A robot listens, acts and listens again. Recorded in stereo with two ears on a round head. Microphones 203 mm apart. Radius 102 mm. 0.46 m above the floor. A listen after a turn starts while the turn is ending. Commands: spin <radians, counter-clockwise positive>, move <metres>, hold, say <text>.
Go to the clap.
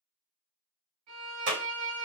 spin -0.87
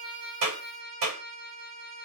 spin -1.31
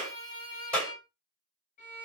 move 1.0
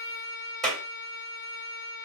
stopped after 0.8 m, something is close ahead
say I am next to the clap.